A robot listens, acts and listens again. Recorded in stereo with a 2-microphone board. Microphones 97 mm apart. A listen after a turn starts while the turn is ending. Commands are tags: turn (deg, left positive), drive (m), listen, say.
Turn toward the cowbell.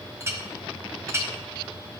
<listen/>
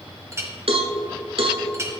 <turn deg="-90"/>
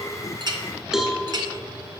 <say>Facing the cowbell, under 1 m away.</say>